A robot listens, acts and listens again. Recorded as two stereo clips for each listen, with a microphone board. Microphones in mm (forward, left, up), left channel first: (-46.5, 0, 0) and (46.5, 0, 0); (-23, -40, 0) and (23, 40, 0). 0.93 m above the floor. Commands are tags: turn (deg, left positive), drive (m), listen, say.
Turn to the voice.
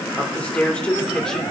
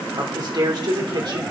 <turn deg="100"/>
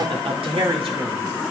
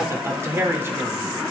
<say>Found it: a man speaking, straight ahead, 2 to 4 m away.</say>